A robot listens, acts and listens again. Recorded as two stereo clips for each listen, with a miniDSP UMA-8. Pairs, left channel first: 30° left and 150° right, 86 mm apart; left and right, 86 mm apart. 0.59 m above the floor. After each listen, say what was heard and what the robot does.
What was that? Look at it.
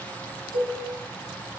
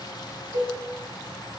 The cowbell: 55° left. Turn 55° left.
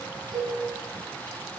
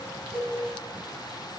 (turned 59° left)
Facing the cowbell.